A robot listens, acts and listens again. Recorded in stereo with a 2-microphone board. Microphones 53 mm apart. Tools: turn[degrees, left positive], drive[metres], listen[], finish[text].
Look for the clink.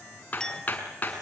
Thought: The clink: about 15° left or 165° left.
Action: turn[15]
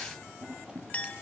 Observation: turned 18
Thought: So it is at 150° left.
Action: turn[150]
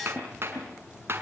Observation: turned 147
Action: listen[]
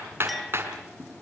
Action: listen[]
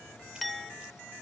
Action: finish[Found it: a clink, straight ahead, 1 to 2 m away.]